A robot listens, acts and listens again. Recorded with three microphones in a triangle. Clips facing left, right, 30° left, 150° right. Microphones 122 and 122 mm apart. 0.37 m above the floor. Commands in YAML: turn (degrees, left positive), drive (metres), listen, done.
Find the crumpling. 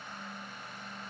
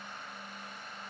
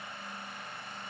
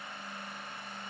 listen: true
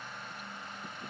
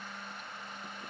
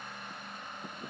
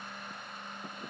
listen: true
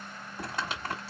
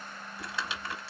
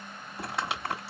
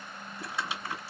turn: 50
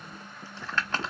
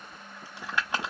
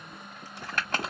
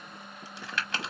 turn: -15
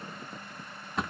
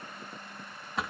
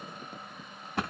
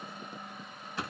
done: "Found it: crumpling, straight ahead."